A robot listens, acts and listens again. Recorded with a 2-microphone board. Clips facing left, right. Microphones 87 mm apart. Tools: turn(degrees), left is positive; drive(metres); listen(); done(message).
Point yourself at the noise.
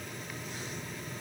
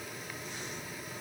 listen()
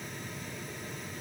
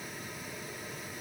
listen()
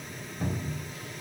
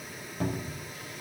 turn(degrees=-90)
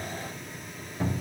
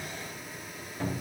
turn(degrees=10)
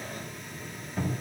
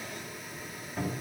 done("Found it: a cupboard door, straight ahead, 2 to 4 m away.")